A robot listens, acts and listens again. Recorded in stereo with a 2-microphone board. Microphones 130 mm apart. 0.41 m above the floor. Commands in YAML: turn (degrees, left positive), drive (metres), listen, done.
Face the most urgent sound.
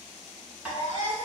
turn: 65
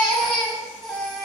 done: "Found it: a baby crying, straight ahead."